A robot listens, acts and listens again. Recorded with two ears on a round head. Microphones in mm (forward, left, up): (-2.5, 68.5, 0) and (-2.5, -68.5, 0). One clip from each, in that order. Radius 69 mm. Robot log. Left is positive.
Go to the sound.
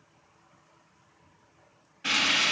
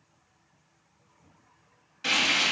cmd yaw -90
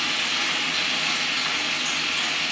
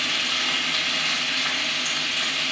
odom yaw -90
cmd fwd 1.0
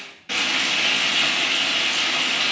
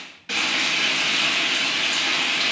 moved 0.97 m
note: The frying is now 15° right.
cmd yaw -15
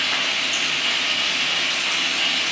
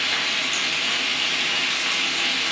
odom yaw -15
cmd fwd 1.0
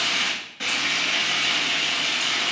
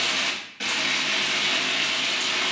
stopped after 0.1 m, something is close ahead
end: Arrived at the frying, straight ahead.